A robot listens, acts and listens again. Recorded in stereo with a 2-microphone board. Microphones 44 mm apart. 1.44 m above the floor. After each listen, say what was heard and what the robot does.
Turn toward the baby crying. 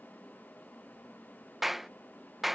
Keep listening.
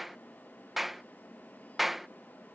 Keep listening.
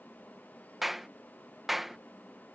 I can't make out a baby crying, only a clap.